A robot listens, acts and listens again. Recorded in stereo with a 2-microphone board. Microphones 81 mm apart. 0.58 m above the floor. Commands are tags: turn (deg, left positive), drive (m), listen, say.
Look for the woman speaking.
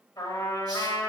<listen/>
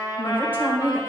<turn deg="-20"/>
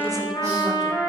<listen/>
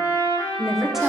<turn deg="-30"/>
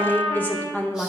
<turn deg="20"/>
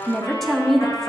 <say>Found it: a woman speaking, straight ahead.</say>